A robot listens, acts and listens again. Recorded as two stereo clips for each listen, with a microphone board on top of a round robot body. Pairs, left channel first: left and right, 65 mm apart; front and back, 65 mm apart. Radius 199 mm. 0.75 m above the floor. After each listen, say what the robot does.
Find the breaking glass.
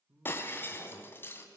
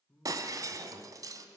Turn 150° left.
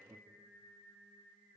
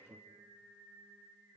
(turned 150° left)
I heard breaking glass from this way, but can't make it out now.